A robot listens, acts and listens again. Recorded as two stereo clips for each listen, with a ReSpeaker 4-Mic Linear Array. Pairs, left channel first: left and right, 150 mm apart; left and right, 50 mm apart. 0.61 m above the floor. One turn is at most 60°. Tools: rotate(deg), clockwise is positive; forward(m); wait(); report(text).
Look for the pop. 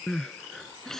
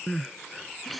wait()
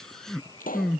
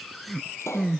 rotate(-60)
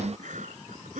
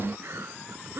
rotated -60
wait()
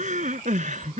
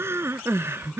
report("I heard a pop, but can't make it out now. It was about 5° left or 55° left.")